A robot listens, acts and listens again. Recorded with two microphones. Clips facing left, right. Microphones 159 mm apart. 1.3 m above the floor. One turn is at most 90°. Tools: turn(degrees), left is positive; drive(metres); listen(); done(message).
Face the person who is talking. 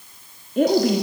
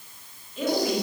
turn(degrees=55)
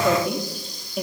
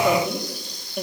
done("Found it: a woman speaking, straight ahead.")